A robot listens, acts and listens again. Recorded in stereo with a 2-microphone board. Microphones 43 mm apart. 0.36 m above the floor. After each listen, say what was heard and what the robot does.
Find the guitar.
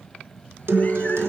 The guitar: about 60° right or 120° right. Turn 60° right.
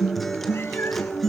Facing the guitar, 1 to 2 m away.